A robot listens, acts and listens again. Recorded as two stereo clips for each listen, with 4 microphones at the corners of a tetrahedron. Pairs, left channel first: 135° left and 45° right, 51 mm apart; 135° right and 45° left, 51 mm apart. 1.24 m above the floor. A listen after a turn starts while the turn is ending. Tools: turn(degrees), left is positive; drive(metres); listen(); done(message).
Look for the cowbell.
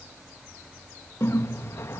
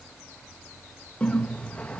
listen()
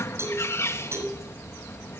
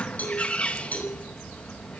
turn(degrees=-75)
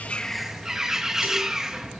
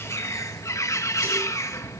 listen()
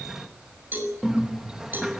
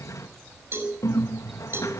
done("Facing the cowbell, over 4 m away.")